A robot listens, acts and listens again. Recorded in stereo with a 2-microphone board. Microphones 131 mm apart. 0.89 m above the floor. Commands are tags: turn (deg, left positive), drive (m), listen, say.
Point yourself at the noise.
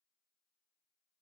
<listen/>
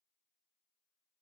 <listen/>
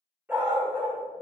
<turn deg="-30"/>
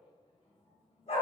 <turn deg="50"/>
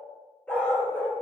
<turn deg="15"/>
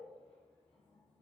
<listen/>
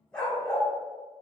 <say>Found it: a dog barking, straight ahead.</say>